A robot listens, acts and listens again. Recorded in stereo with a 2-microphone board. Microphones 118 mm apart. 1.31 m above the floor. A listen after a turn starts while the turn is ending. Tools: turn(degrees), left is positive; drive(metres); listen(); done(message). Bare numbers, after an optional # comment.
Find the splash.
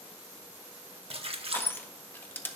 # The splash: about 55° right or 125° right.
turn(-55)
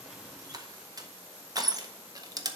listen()
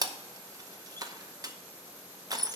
done("I heard a splash, but can't make it out now. It was about straight ahead or 70° right.")